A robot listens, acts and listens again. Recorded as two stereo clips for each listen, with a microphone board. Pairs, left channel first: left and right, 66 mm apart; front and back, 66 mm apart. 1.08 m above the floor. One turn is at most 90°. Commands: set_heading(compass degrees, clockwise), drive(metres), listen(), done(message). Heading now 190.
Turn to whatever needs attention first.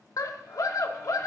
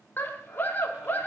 set_heading(130)
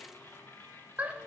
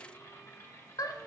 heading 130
set_heading(155)
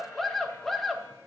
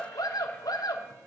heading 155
done("Found it: a scream, straight ahead.")